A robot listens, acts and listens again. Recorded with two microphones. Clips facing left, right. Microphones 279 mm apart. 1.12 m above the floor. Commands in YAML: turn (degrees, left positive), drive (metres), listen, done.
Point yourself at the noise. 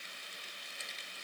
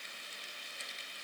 listen: true
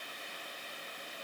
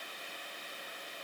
listen: true
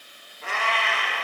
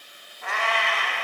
turn: 35
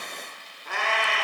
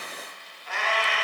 turn: 110
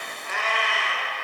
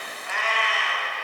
turn: 50
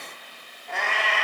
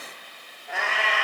done: "Found it: a cat meowing, straight ahead."